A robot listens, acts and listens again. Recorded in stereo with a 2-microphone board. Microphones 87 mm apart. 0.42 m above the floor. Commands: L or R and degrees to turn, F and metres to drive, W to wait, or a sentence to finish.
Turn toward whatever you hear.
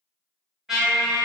R30
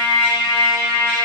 L25
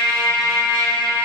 L10
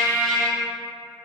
Found it: a trumpet, straight ahead.